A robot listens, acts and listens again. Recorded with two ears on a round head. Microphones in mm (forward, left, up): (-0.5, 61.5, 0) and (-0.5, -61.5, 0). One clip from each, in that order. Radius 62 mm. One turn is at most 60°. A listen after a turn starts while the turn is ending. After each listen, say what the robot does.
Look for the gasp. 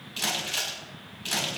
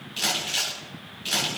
Keep listening.
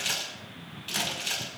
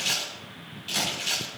Keep listening.
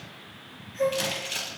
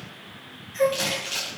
Turn 60° right.
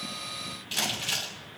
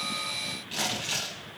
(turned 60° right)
Turn 30° right.
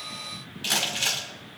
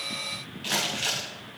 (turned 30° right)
I heard a gasp from this way, but can't make it out now.